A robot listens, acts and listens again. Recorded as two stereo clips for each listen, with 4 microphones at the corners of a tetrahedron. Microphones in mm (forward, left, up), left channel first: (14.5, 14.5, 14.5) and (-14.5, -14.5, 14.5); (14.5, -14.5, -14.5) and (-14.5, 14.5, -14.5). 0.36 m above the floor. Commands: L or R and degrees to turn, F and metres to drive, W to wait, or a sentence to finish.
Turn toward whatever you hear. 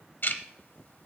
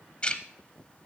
L15
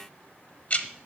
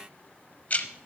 Facing the ticking, under 1 m away.